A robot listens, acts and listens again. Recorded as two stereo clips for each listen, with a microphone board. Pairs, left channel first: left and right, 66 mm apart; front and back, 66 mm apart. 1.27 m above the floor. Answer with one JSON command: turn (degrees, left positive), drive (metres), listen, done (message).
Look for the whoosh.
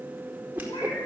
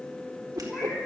{"turn": -155}
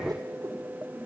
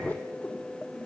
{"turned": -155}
{"listen": true}
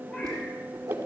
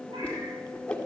{"turn": -70}
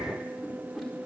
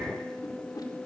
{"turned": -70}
{"done": "Found it: a whoosh, straight ahead, over 4 m away."}